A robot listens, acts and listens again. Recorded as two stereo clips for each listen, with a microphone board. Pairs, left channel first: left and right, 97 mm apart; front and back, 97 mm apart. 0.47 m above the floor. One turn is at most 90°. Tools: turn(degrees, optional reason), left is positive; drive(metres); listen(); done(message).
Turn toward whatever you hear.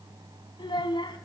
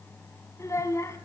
turn(degrees=60, reason="The child speaking: 60° left.")
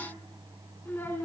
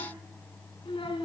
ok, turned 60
turn(degrees=20, reason="The child speaking is now 20° left.")
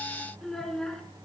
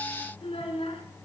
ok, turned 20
done("Facing the child speaking.")